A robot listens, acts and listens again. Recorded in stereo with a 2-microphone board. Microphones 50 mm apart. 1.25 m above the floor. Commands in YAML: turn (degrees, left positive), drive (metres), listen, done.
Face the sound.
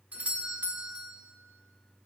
turn: -35
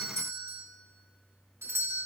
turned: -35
turn: -110
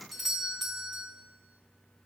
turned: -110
done: "Found it: a doorbell, straight ahead."